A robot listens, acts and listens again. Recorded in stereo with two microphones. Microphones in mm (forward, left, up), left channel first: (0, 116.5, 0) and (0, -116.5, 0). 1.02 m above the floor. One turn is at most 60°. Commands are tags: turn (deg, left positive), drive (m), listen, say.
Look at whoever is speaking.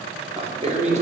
<turn deg="-30"/>
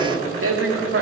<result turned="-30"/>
<turn deg="-60"/>
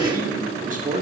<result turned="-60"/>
<turn deg="-30"/>
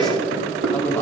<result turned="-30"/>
<turn deg="10"/>
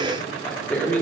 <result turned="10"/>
<turn deg="10"/>
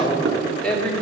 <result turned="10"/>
<say>Facing the man speaking.</say>